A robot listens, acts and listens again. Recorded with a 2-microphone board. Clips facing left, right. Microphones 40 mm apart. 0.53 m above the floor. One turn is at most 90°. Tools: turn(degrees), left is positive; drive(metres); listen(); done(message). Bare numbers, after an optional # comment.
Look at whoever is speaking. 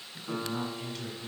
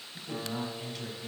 turn(-30)
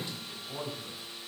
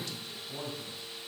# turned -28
# So it is at 25° left.
turn(25)
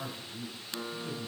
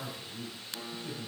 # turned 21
done("Found it: a man speaking, straight ahead, 1 to 2 m away.")